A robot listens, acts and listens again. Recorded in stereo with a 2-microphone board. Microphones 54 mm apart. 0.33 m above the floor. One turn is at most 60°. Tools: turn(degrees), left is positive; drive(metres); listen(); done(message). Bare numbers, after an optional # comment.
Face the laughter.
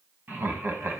# The laughter: about 40° right or 140° right.
turn(-40)
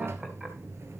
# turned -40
listen()
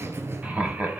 # The laughter: about 30° right or 150° right.
turn(-30)
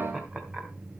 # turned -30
listen()
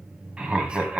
# So it is at 20° right.
turn(-20)
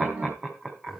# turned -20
# The laughter is now 15° right.
turn(-15)
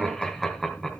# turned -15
done("Facing the laughter, 2 to 4 m away.")